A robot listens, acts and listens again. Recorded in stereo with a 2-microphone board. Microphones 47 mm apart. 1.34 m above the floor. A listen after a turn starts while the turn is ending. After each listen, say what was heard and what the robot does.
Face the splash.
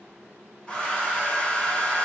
Keep listening.
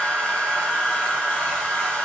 Keep listening.
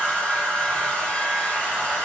I can't make out a splash to turn to.